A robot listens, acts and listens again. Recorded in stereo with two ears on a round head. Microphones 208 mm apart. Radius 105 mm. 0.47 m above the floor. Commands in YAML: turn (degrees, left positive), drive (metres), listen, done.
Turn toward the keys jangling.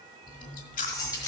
turn: 15
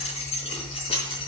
turn: 25
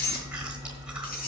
turn: 135
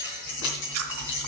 turn: 55
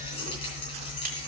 turn: 25
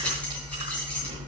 listen: true
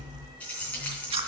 done: "Facing the keys jangling, 2 to 4 m away."